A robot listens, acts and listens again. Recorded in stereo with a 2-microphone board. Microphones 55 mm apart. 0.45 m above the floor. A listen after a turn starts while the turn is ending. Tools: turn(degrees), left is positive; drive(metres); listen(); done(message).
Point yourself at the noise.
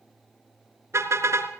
turn(degrees=-60)
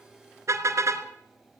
turn(degrees=-60)
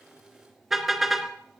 done("Facing the car horn, 2 to 4 m away.")